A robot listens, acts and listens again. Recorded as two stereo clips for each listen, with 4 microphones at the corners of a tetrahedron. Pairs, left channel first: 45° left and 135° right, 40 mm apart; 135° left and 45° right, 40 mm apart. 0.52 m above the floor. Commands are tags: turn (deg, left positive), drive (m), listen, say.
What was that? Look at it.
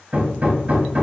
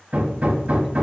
<turn deg="-90"/>
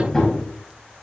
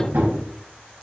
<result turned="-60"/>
<turn deg="-30"/>
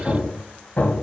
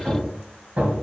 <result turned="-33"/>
<say>Found it: hammering, straight ahead, 2 to 4 m away.</say>